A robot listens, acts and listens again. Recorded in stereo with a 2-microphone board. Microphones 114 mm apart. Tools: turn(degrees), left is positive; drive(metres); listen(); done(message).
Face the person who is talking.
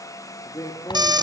turn(degrees=35)
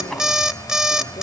listen()
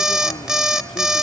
listen()
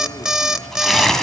done("I heard a man speaking, but can't make it out now. It was about straight ahead or 110° left.")